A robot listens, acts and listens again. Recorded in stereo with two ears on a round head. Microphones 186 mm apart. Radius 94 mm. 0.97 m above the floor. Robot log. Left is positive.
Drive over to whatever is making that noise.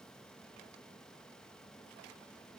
cmd idle
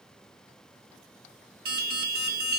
note: The alarm: about 50° right or 130° right.
cmd yaw -50
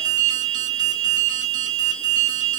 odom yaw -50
note: So it is at 70° right.
cmd yaw -70
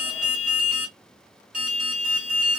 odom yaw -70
cmd fwd 1.0
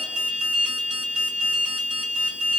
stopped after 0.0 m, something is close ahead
end: Blocked. The alarm is further on, straight ahead.